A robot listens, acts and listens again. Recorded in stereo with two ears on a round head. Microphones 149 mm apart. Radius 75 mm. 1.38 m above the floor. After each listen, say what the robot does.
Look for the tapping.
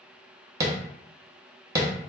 Turn 20° right.
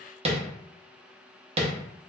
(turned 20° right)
Turn 140° right.
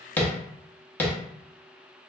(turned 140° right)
Turn 10° left.
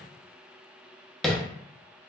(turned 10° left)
Facing the tapping, under 1 m away.